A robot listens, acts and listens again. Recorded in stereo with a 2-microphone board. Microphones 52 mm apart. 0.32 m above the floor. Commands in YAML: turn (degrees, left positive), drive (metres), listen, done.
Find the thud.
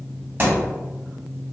turn: -40
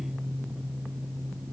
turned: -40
listen: true
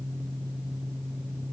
done: "I heard a thud, but can't make it out now. It was about straight ahead or 100° right."